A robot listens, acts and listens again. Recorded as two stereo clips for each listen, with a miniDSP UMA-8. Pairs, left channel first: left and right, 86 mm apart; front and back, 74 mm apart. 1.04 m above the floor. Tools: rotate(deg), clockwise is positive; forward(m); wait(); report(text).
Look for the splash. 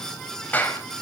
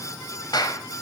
wait()
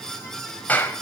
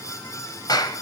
wait()
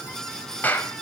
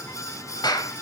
report("I can't make out a splash to turn to.")